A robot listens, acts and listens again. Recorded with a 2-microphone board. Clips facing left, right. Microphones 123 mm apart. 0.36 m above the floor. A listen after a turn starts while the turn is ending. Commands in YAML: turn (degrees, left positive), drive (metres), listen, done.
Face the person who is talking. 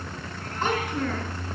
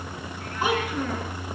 turn: -30
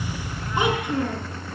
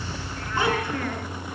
turn: 20
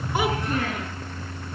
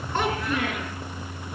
listen: true
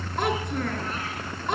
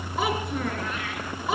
done: "Found it: a child speaking, straight ahead."